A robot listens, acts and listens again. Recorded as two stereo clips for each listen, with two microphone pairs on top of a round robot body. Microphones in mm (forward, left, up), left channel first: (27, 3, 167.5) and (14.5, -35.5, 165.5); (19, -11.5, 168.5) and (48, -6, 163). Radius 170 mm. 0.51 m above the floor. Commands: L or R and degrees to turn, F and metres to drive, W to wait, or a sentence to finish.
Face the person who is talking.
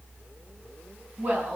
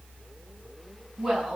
R85
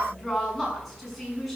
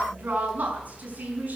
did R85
R15
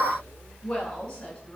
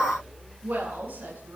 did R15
Found it: a woman speaking, straight ahead, over 4 m away.